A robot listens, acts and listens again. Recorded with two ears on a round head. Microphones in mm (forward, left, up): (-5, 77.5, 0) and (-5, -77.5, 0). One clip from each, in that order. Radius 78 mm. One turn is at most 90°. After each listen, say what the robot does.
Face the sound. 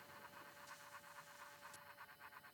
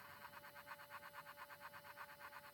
Keep listening.
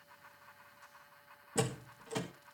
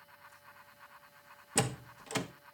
Turn 55° right.
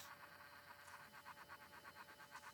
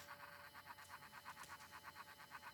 Keep listening.
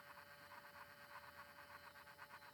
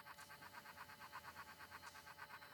I heard a door slam, but can't make it out now. It was about straight ahead or 70° right.